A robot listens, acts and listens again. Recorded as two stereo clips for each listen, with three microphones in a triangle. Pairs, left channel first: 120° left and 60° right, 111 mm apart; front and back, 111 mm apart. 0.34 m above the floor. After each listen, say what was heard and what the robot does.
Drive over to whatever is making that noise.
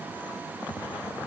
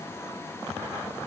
Keep listening.
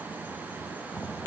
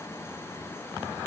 Keep listening.
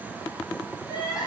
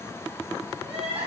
The crying: 170° left. Turn 170° left.
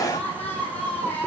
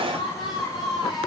The crying is now 45° left. Turn 45° left.
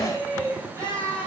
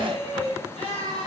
Drive 1.0 m forward.
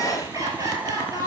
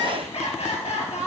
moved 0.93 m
Drive 1.0 m forward.
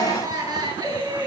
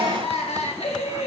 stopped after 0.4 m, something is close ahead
The crying is now 10° right. Turn 10° right.
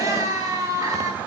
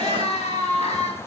I am next to the crying.